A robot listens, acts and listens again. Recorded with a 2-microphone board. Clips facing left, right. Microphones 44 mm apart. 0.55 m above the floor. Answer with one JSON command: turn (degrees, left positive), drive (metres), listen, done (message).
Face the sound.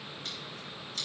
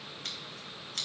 {"turn": -55}
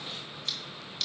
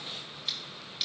{"turn": -10}
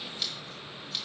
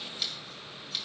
{"done": "Facing the scissors, 2 to 4 m away."}